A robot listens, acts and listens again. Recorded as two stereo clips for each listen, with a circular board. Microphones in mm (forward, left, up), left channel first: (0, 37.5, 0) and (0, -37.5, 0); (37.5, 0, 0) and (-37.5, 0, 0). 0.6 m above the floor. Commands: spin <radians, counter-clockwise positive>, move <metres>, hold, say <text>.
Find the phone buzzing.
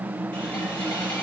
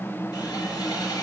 hold
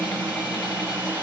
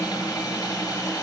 hold
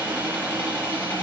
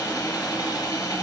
say I can't make out a phone buzzing, only sawing.